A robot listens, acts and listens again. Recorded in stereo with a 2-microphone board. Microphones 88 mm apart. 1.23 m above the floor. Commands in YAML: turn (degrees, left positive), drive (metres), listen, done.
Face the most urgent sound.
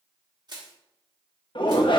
turn: 65
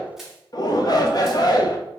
turn: 50
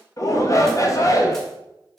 turn: 40
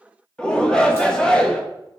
turn: 10
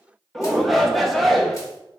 done: "Facing the shout, under 1 m away."